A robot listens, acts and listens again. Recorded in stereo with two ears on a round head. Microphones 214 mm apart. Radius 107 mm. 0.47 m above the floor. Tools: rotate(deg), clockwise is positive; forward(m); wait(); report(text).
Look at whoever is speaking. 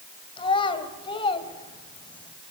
rotate(-20)
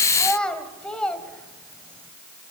report("Found it: a child speaking, straight ahead.")